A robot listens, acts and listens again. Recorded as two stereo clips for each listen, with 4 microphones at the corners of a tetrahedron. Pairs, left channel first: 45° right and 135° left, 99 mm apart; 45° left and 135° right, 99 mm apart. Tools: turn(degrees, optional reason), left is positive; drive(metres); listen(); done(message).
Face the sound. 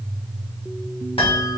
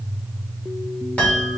turn(degrees=-30, reason="The chime: 30° right.")
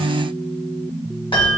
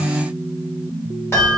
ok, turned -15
turn(degrees=-15, reason="The chime is now 15° right.")
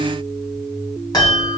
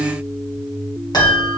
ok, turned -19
done("Facing the chime, 1 to 2 m away.")